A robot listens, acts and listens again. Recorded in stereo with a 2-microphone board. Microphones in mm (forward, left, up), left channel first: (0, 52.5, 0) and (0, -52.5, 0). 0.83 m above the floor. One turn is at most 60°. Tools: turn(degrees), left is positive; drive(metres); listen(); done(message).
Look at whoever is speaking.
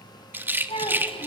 turn(degrees=60)
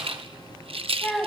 done("Found it: a child speaking, straight ahead, 2 to 4 m away.")